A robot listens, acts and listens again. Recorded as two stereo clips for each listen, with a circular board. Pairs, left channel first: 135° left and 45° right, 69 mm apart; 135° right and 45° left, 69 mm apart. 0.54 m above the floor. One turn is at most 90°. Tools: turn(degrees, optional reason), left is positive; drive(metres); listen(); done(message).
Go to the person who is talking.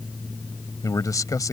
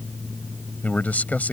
turn(degrees=90, reason="The man speaking: 160° left.")
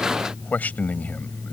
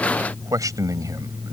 turn(degrees=70, reason="The man speaking is now 70° left.")
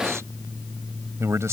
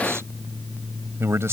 drive(metres=1.0)
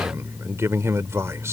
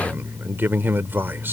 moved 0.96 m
drive(metres=1.0)
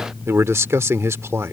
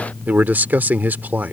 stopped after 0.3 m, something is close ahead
turn(degrees=-10, reason="The man speaking is now 10° right.")
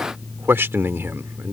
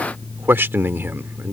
done("I am next to the man speaking.")